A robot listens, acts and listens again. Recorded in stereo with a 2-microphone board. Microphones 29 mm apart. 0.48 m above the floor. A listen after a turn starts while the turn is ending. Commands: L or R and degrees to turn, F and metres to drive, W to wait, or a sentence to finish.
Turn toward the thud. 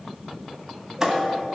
R20
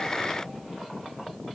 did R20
W
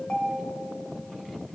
I heard a thud, but can't make it out now. It was about straight ahead or 140° right.